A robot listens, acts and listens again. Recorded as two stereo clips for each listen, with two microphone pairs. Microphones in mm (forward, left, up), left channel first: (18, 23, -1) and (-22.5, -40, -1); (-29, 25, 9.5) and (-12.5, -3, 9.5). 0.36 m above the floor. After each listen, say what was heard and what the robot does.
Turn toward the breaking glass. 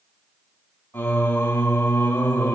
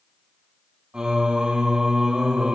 Keep listening.
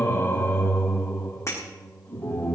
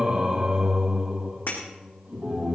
The breaking glass: 110° left. Turn 110° left.
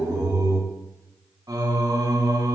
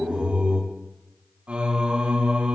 Facing where the breaking glass came from. I can't hear it now.